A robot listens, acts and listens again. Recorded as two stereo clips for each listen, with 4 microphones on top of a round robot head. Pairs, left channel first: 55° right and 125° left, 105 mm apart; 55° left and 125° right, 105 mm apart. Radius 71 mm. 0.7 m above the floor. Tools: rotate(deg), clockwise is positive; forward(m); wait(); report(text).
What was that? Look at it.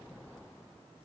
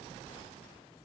wait()
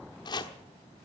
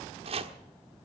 rotate(105)
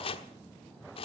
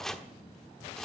rotate(30)
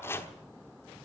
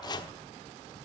rotate(-10)
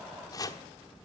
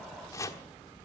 report("Found it: chopping, straight ahead.")